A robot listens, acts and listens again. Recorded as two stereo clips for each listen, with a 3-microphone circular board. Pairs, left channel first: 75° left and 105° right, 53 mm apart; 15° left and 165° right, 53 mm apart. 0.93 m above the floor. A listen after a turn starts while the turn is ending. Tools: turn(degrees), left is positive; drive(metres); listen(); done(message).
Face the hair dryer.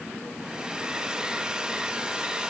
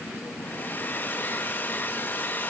turn(degrees=-30)
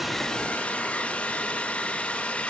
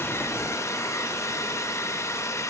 turn(degrees=10)
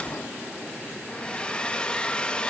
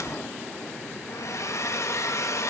done("Facing the hair dryer, under 1 m away.")